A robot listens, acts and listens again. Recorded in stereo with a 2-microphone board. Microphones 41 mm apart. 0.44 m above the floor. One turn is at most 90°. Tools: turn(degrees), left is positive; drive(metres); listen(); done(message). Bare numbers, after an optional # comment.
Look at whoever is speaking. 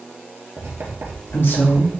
# The woman speaking: about 70° left or 110° left.
turn(70)
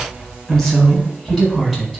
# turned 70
done("Found it: a woman speaking, straight ahead.")